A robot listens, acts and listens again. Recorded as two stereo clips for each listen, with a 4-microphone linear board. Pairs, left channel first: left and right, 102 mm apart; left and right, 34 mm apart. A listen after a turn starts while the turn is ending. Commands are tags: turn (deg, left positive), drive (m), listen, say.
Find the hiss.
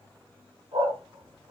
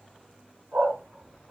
<listen/>
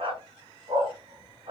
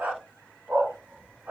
<listen/>
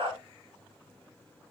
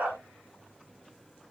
<say>I can't make out a hiss, only a dog barking.</say>